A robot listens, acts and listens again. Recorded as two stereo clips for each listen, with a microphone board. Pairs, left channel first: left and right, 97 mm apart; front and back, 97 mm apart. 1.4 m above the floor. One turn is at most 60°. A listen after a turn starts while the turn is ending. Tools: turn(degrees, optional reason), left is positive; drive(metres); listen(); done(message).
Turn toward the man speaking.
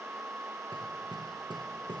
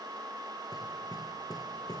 listen()
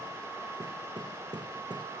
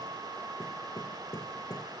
listen()
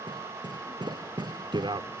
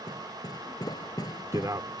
turn(degrees=-60, reason="The man speaking: 125° right.")
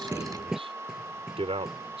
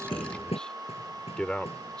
turn(degrees=-60, reason="The man speaking is now 80° right.")
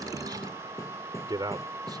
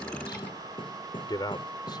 turn(degrees=-45, reason="The man speaking is now 45° right.")
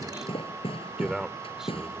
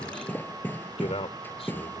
done("Found it: a man speaking, straight ahead.")